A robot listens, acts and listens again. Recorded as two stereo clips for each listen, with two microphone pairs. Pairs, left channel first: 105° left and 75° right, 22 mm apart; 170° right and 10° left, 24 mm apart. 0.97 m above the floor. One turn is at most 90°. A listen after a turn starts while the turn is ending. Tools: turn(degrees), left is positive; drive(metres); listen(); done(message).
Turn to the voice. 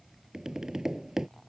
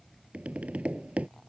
listen()
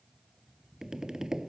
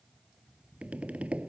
listen()
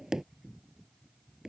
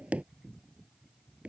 done("I can't make out anyone speaking, only tapping.")